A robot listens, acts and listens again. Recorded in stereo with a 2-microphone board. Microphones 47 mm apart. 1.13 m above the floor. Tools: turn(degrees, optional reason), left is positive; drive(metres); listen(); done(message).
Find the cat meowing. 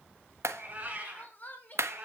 turn(degrees=-25, reason="The cat meowing: about 25° right or 155° right.")
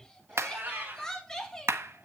turn(degrees=-140, reason="So it is at 140° right.")
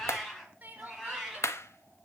done("Found it: a cat meowing, straight ahead.")